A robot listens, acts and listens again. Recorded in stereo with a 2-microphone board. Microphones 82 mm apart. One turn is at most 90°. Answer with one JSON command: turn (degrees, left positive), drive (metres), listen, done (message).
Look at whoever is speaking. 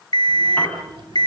{"turn": -90}
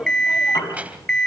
{"turn": -20}
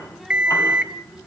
{"done": "Found it: a child speaking, straight ahead, 2 to 4 m away."}